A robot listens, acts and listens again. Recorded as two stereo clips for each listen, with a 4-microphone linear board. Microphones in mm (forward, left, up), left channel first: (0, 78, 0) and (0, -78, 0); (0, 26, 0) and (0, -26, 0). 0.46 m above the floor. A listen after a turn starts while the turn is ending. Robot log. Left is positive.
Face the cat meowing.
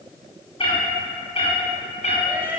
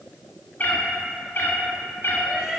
note: The cat meowing: about 50° left or 130° left.
cmd yaw +50
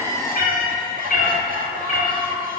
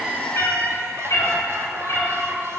note: So it is at 60° left.
cmd yaw +60
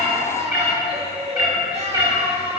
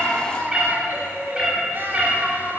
note: The cat meowing is now 20° right.
cmd yaw -20
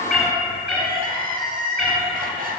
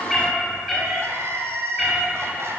end: Found it: a cat meowing, straight ahead.